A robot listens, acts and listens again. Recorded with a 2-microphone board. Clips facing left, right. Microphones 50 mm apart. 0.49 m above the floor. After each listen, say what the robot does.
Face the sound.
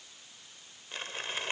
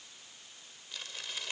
Turn 40° left.
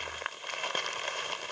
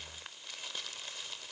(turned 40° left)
Turn 95° left.
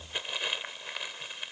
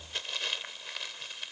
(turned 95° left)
Turn 20° left.
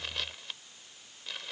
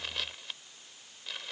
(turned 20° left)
Found it: crumpling, straight ahead.